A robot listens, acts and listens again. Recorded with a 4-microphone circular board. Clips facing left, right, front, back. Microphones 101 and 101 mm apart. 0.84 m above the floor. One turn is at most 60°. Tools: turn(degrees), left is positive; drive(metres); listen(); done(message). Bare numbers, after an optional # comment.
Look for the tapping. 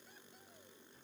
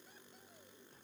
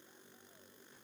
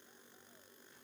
listen()
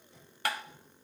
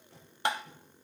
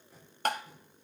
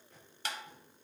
# The tapping: 25° right.
turn(-25)
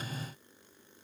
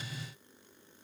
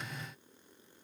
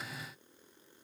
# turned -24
listen()
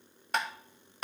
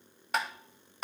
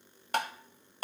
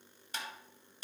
done("Found it: tapping, straight ahead, 1 to 2 m away.")